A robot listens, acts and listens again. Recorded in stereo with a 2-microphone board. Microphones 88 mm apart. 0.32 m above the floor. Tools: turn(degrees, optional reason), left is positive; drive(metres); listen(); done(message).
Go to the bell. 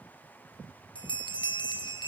turn(degrees=65, reason="The bell: about 65° left or 115° left.")
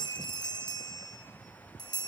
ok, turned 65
turn(degrees=50, reason="So it is at 50° left.")
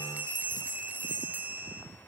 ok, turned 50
turn(degrees=-20, reason="The bell is now 20° right.")
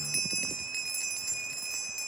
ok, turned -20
drive(metres=1.0)
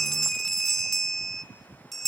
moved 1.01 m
drive(metres=1.0)
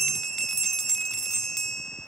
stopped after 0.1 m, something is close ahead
done("Arrived at the bell, straight ahead.")